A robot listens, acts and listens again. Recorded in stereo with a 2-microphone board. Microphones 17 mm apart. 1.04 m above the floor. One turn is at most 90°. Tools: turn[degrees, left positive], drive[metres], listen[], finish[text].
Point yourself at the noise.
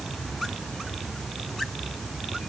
Action: listen[]
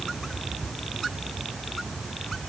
Action: listen[]
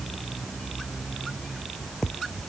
Action: finish[I can't make out anything.]